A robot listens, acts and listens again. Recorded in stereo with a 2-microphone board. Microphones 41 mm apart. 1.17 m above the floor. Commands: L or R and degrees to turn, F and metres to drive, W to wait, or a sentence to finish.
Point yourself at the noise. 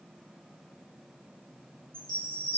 L25
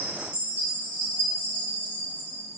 L125
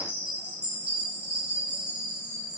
R20
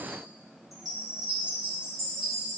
Facing the chime, 1 to 2 m away.